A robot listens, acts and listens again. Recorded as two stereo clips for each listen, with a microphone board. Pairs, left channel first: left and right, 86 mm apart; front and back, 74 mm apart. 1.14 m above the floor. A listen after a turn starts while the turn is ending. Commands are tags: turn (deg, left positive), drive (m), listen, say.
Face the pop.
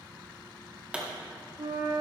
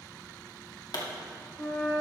<turn deg="-15"/>
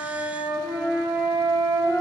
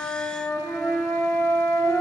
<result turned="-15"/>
<say>I heard a pop from this way, but can't make it out now.</say>